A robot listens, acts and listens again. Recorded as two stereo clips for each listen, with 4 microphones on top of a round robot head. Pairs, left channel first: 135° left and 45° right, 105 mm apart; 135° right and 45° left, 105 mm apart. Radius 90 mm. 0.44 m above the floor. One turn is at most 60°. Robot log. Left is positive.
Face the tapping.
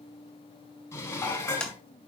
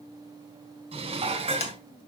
note: The tapping: 140° right.
cmd yaw -60
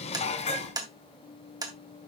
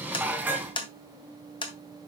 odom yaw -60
note: The tapping is now 95° right.
cmd yaw -60
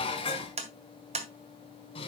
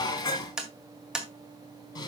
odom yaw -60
note: The tapping is now 40° right.
cmd yaw -40
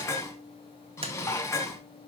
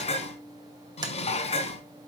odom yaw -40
cmd idle
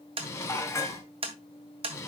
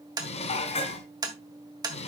note: The tapping is now 10° right.
cmd yaw -10
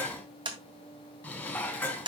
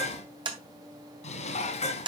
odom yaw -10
end: Found it: tapping, straight ahead.